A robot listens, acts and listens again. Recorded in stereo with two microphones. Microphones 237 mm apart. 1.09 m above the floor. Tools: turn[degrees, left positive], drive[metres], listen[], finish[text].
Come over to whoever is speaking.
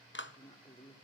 Thought: The woman speaking: about 20° left or 160° left.
Action: turn[20]
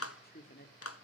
Thought: So it is at 140° left.
Action: turn[140]
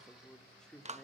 Action: drive[1.0]
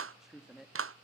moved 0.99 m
Action: drive[1.0]
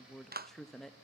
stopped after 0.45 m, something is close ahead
Action: finish[Arrived at the woman speaking, straight ahead.]